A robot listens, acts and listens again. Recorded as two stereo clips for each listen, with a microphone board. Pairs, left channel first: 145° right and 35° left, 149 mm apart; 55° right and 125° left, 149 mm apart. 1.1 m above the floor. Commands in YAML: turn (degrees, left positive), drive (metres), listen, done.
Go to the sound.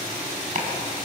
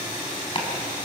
drive: 1.0
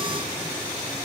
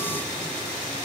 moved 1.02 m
listen: true
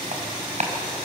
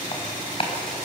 drive: 1.0
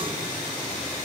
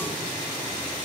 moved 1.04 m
listen: true
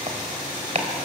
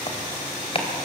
drive: 1.0
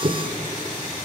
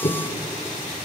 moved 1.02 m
turn: -10
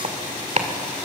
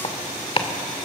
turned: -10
drive: 1.0
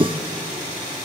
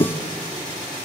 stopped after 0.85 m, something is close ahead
turn: -10
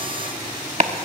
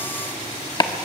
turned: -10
done: "I am next to the chopping."